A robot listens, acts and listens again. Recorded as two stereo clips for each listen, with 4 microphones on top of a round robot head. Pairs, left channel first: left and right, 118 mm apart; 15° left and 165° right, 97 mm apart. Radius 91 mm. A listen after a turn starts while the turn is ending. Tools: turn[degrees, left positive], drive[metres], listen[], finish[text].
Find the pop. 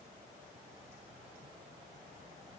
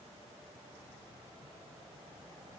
Action: listen[]
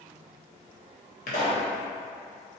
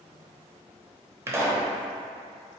Thought: The pop: 130° left.
Action: turn[130]
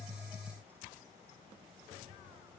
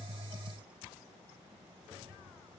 Action: finish[Facing where the pop came from. I can't hear it now.]